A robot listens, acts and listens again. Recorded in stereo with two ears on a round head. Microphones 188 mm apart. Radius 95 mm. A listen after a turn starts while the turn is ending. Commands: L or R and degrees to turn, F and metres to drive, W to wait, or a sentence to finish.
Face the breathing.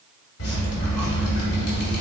W
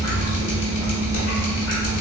W
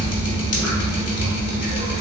I can't make out breathing to turn to.